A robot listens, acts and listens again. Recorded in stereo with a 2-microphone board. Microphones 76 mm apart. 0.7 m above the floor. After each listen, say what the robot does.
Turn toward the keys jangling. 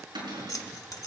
Turn 50° left.
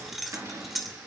Found it: keys jangling, straight ahead.